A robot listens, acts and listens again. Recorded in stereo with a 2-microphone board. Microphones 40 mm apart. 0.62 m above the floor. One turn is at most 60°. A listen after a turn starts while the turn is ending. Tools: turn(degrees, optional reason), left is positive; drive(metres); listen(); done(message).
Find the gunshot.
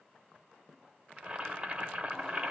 listen()
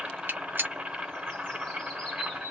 turn(degrees=-55, reason="The gunshot: about 55° right or 125° right.")
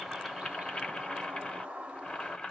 listen()
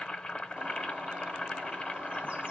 done("I heard a gunshot, but can't make it out now. It was about straight ahead or 70° right.")